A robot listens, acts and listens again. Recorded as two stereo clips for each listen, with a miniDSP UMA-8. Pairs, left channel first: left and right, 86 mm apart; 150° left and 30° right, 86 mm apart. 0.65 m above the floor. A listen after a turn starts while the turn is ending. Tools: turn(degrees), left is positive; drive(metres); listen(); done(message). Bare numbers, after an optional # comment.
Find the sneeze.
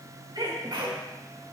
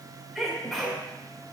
# The sneeze: 115° right.
turn(-115)
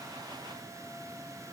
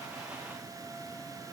done("I heard a sneeze from this way, but can't make it out now.")